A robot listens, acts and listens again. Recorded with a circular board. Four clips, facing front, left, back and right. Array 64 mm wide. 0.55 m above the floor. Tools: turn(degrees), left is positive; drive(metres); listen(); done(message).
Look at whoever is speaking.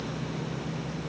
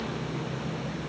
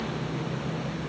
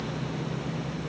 listen()
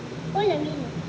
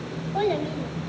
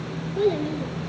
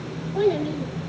turn(degrees=30)
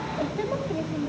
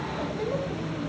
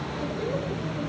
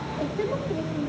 listen()
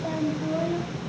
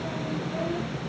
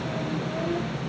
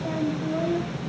listen()
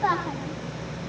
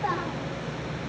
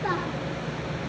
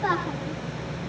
turn(degrees=-10)
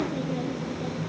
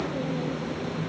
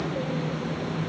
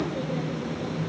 listen()
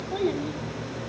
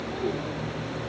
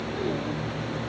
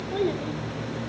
listen()
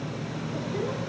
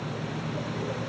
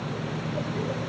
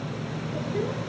done("I heard a child speaking from this way, but can't make it out now.")